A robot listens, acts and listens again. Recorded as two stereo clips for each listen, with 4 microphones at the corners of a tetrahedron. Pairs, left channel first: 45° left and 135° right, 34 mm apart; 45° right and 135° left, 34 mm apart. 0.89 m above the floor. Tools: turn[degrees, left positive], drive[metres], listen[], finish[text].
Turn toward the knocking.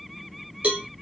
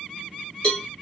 Action: listen[]
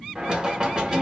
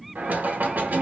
Thought: The knocking: 165° left.
Action: turn[165]
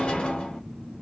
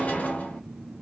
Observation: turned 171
Action: finish[Found it: knocking, straight ahead, 1 to 2 m away.]